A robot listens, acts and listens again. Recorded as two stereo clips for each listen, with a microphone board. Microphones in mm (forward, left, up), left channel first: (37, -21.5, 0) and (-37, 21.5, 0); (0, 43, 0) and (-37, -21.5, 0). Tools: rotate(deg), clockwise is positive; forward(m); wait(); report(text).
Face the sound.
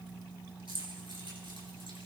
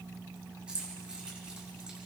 rotate(-165)
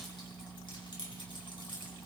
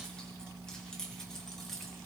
rotate(25)
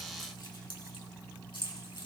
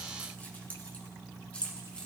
rotate(15)
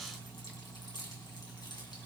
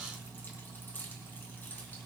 report("Facing the keys jangling, 2 to 4 m away.")